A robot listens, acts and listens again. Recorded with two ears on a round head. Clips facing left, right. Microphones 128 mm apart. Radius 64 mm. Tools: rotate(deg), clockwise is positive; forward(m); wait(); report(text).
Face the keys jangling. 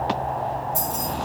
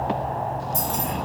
rotate(45)
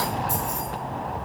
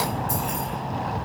rotate(20)
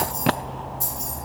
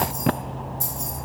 rotate(25)
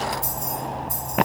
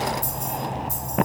rotate(25)
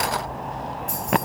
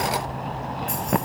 report("Found it: keys jangling, straight ahead, 2 to 4 m away.")